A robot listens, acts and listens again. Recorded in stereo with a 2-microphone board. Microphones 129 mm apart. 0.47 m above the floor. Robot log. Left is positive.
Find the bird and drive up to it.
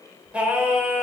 cmd idle
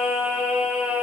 cmd idle
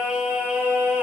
end: I can't make out a bird to turn to.